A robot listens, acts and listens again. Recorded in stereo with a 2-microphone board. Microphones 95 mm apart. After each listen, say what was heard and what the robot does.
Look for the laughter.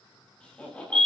Turn 30° left.
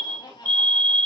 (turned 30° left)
So it is at 130° left. Turn 130° left.
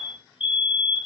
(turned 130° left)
Keep listening.
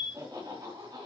The laughter is now 45° right. Turn 45° right.
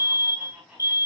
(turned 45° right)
Facing the laughter.